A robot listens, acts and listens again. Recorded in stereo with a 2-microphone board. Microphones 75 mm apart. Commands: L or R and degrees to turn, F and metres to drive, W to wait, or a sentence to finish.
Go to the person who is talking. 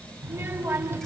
R30
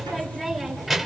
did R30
F1.0
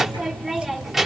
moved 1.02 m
F1.0
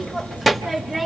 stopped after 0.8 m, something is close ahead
I am next to the child speaking.